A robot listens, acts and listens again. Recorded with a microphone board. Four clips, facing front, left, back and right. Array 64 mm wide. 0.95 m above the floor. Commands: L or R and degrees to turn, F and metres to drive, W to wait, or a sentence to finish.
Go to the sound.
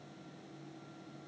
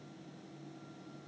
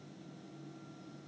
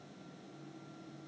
W
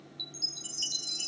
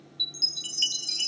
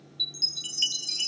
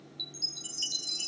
L140
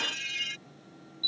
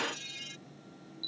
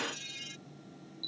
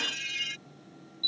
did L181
R40
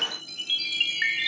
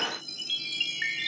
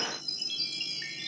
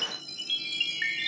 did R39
F1.0
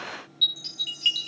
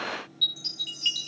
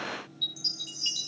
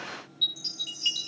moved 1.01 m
F1.0
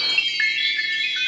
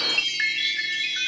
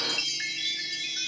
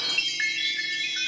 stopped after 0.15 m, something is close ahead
L10
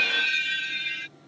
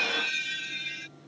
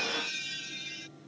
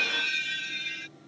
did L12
Arrived at the chime, straight ahead.